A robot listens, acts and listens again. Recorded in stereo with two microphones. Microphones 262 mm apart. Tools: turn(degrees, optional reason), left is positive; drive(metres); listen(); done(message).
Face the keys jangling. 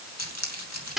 turn(degrees=90)
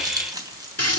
turn(degrees=-15, reason="So it is at 15° right.")
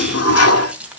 done("Found it: keys jangling, straight ahead.")